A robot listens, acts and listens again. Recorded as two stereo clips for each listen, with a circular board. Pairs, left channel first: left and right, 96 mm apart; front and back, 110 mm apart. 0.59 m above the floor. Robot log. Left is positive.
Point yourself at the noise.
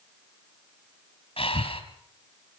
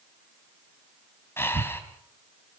note: The breathing: 70° left.
cmd yaw +70
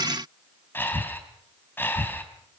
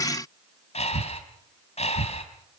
note: The breathing is now 20° left.
cmd yaw +20
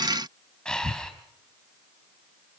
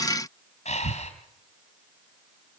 note: The breathing is now 10° left.
cmd yaw +10
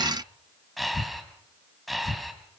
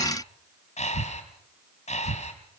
end: Facing the breathing, 2 to 4 m away.